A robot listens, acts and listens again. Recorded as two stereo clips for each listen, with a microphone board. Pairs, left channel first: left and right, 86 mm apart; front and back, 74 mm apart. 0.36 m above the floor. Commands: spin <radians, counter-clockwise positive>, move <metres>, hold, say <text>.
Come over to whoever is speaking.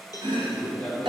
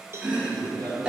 spin 3.05
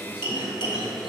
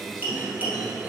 hold
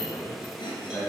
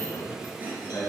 spin 0.61
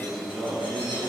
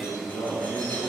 spin -0.17
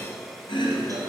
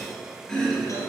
hold
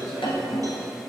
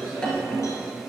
move 1.0
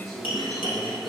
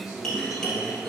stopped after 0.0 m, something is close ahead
say Something is in my way. I am facing the man speaking but have not reached it.